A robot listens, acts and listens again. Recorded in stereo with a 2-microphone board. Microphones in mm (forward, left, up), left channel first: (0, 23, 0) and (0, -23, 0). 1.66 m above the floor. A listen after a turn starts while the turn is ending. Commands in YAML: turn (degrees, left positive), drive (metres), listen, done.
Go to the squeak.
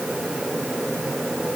listen: true
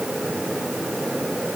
listen: true
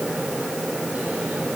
done: "I can't make out a squeak."